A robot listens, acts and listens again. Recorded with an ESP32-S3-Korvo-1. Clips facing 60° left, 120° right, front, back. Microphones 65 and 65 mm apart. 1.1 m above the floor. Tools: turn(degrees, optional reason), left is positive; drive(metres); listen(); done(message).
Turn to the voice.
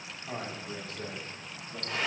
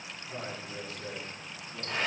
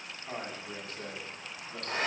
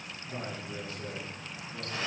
turn(degrees=30, reason="The man speaking: 30° left.")
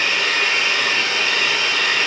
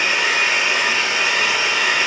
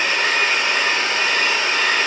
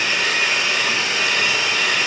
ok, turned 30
listen()
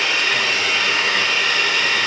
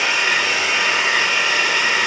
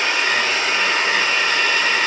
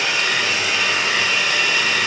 listen()
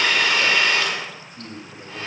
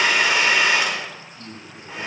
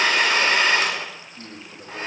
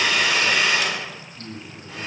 turn(degrees=15, reason="The man speaking is now 15° left.")
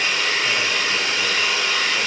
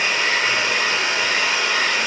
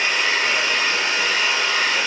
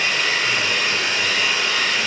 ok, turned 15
listen()
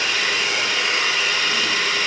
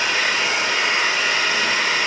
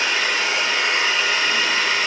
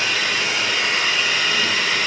listen()
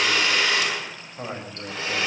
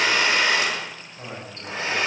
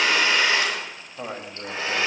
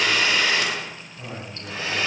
done("Facing the man speaking.")